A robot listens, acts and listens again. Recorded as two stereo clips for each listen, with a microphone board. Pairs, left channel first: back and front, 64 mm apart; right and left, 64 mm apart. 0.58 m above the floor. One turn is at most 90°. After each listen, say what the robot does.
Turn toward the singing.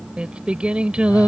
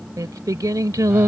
Turn 75° left.
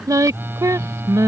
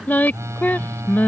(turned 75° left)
Turn 30° right.
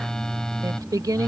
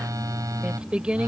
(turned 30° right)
Turn 15° left.
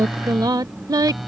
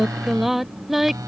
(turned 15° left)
Found it: singing, straight ahead.